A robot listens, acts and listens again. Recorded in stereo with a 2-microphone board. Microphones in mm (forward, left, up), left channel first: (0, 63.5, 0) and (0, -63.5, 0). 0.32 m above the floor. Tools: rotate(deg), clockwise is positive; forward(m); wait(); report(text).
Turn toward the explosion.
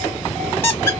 wait()
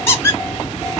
wait()
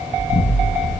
rotate(-50)
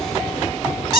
wait()
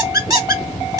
report("I heard an explosion, but can't make it out now. It was about straight ahead or 80° left.")